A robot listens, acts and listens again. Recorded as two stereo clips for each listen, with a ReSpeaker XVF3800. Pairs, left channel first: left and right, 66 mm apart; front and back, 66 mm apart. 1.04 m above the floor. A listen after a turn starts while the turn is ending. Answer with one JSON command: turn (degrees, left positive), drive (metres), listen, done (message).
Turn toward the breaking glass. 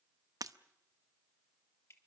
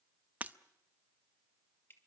{"turn": -115}
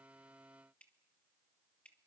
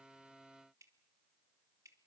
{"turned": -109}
{"done": "I heard breaking glass from this way, but can't make it out now."}